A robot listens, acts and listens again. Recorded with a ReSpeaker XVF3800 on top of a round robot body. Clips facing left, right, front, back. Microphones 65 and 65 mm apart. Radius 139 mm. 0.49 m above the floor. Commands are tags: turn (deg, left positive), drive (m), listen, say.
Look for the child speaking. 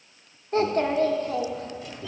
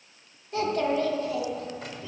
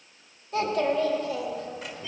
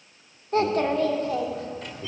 <turn deg="135"/>
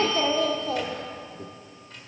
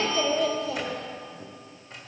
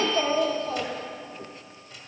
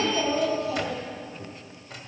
<turn deg="45"/>
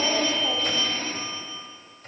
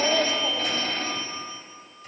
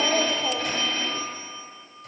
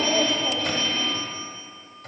<say>Found it: a child speaking, straight ahead, 1 to 2 m away.</say>